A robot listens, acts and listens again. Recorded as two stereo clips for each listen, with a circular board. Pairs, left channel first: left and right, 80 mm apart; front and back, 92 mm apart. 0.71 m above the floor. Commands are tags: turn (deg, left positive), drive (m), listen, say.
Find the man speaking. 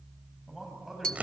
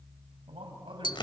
<turn deg="-175"/>
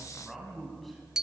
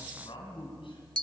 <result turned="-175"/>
<say>Facing the man speaking, over 4 m away.</say>